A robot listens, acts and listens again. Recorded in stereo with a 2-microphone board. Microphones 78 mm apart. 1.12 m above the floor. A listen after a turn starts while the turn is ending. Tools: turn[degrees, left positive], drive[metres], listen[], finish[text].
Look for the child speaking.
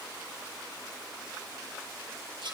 Action: listen[]
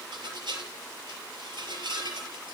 Action: listen[]
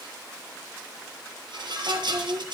Thought: The child speaking: about 75° right or 105° right.
Action: turn[-75]
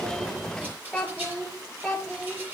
Action: finish[Found it: a child speaking, straight ahead, 2 to 4 m away.]